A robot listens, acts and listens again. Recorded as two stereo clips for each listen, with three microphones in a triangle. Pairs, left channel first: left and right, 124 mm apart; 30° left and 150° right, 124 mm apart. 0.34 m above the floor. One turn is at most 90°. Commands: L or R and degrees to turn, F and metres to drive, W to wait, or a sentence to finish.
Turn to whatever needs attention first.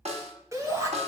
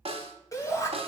R30
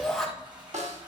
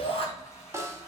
Facing the shout.